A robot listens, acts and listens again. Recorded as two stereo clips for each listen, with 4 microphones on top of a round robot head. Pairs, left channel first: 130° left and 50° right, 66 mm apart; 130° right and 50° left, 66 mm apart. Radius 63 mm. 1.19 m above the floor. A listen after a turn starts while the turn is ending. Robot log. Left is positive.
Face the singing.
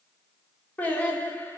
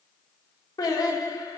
note: The singing: 165° right.
cmd yaw -165
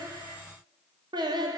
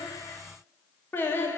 note: The singing is now 70° right.
cmd yaw -70
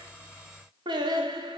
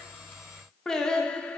note: The singing is now 55° right.
cmd yaw -55
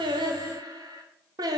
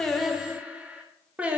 note: The singing is now 20° right.
cmd yaw -20
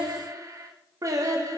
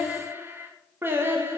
end: Facing the singing.